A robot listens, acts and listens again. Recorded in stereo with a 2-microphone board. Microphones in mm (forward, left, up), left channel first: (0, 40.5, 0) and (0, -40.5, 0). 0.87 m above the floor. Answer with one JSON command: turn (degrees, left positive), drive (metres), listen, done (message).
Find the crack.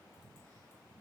{"listen": true}
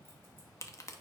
{"turn": 40}
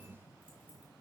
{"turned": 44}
{"listen": true}
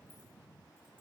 {"done": "I heard a crack, but can't make it out now. It was about 5° right or 100° left."}